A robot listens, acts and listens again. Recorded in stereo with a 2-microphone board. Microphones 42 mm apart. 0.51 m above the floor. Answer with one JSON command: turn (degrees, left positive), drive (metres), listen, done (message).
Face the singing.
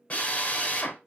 {"listen": true}
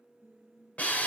{"turn": -55}
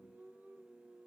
{"turn": -70}
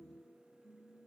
{"done": "Found it: singing, straight ahead."}